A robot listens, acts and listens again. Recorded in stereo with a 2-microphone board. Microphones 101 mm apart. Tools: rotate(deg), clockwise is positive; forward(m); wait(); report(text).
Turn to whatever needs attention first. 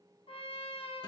wait()
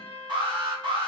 rotate(45)
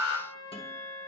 report("Found it: an alarm, straight ahead, 1 to 2 m away.")